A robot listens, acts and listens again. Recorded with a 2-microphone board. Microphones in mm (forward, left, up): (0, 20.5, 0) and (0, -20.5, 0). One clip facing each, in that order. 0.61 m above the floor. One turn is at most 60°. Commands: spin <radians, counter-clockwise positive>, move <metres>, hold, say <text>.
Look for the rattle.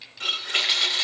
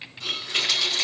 spin 0.44
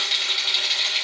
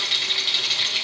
say Facing the rattle, 2 to 4 m away.